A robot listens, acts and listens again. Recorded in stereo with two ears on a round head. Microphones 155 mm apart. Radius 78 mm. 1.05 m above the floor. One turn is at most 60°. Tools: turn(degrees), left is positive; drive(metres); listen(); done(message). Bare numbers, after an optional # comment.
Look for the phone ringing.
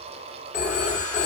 # The phone ringing: about 50° left or 130° left.
turn(50)
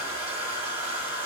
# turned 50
listen()
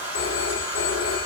# So it is at 80° left.
turn(60)
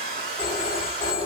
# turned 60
# The phone ringing is now 20° left.
turn(20)
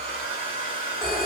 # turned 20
done("Found it: a phone ringing, straight ahead, under 1 m away.")